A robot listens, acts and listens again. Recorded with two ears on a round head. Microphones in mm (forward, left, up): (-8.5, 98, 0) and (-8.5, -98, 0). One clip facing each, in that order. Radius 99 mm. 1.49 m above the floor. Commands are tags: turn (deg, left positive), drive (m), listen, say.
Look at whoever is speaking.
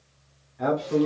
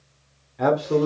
<turn deg="-60"/>
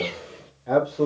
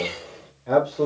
<say>Found it: a man speaking, straight ahead.</say>